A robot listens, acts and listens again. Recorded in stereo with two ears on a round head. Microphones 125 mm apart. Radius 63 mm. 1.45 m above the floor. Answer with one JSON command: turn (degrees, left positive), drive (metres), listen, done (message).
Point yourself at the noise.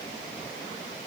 {"listen": true}
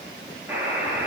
{"turn": -15}
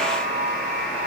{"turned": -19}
{"done": "Found it: a buzzer, straight ahead, 2 to 4 m away."}